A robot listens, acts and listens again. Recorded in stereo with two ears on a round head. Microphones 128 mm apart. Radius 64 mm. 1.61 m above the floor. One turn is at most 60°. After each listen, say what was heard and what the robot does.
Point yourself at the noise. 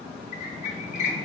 The squeak: about 50° left or 130° left. Turn 50° left.
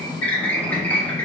So it is at 15° left. Turn 15° left.
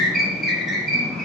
Facing the squeak.